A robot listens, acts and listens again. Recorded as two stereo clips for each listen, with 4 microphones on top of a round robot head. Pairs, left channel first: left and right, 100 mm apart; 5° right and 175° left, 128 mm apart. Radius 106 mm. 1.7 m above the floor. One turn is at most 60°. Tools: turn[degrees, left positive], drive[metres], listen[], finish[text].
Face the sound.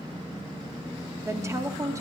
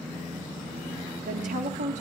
Thought: The woman speaking: 150° right.
Action: turn[-60]
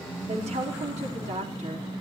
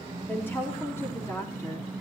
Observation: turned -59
Thought: The woman speaking is now 75° right.
Action: turn[-60]
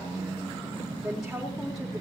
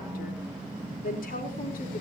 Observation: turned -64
Action: finish[Facing the woman speaking.]